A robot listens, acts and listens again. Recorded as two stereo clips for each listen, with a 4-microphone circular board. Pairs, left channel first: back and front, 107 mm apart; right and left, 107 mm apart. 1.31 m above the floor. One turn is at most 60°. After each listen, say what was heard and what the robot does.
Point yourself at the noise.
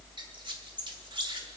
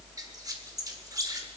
The squeak: 40° left. Turn 40° left.
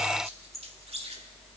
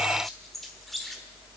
Found it: a squeak, straight ahead, 1 to 2 m away.